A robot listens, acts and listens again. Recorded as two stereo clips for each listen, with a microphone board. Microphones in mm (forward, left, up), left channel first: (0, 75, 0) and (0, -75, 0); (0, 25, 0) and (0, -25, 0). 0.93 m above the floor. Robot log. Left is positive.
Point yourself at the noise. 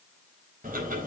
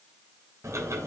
note: The ticking: about 60° right or 120° right.
cmd yaw -60
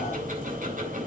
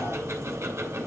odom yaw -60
note: So it is at 60° right.
cmd yaw -60
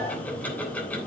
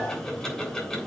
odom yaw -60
note: The ticking is now 10° left.
cmd yaw +10
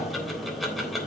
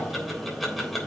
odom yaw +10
end: Found it: ticking, straight ahead.